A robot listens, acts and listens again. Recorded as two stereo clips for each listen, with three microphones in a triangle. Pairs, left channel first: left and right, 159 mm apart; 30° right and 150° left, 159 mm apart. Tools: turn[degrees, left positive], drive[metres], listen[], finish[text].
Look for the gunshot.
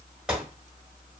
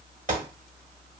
Thought: The gunshot: 175° right.
Action: turn[-175]
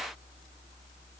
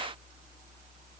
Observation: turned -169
Action: finish[Facing where the gunshot came from. I can't hear it now.]